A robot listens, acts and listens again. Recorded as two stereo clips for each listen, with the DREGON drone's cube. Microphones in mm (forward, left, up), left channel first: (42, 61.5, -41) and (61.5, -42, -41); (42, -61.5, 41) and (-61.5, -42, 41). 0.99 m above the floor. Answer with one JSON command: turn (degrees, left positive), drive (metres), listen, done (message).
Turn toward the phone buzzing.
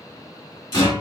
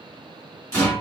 {"listen": true}
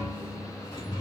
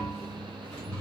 {"listen": true}
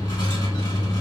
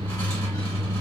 {"done": "I can't make out a phone buzzing to turn to."}